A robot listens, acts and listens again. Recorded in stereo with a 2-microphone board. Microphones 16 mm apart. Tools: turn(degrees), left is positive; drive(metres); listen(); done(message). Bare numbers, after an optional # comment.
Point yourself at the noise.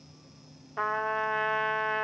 # The trumpet: about 30° left or 150° left.
turn(30)
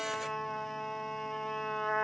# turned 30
# So it is at 115° left.
turn(115)
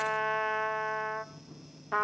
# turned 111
done("Facing the trumpet.")